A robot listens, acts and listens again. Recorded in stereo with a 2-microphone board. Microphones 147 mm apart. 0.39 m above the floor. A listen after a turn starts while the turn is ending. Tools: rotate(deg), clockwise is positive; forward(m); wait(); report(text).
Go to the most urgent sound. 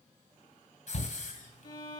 rotate(-55)
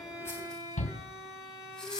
rotate(-65)
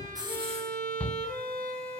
forward(1.0)
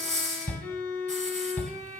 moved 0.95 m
rotate(-10)
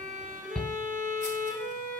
forward(1.0)
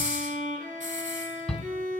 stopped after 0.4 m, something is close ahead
report("Arrived at the shout, straight ahead.")